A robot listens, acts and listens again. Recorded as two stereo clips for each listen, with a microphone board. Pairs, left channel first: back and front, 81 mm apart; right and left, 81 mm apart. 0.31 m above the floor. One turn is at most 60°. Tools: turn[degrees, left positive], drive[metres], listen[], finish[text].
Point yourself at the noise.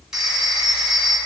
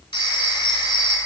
Thought: The phone ringing: 85° right.
Action: turn[-60]
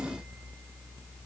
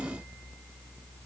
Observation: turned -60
Thought: Nothing new. It was at 25° right.
Action: turn[-25]
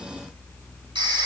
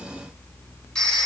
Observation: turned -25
Thought: The phone ringing is now 10° right.
Action: turn[-10]
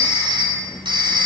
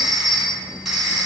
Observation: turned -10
Action: finish[Found it: a phone ringing, straight ahead, 1 to 2 m away.]